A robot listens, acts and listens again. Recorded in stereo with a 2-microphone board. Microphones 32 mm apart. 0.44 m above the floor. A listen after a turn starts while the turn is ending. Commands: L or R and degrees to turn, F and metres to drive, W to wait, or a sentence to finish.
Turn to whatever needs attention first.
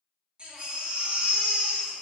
R30
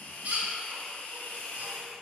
R120
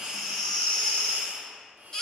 L20
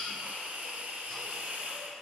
W
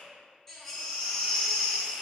Found it: a baby crying, straight ahead.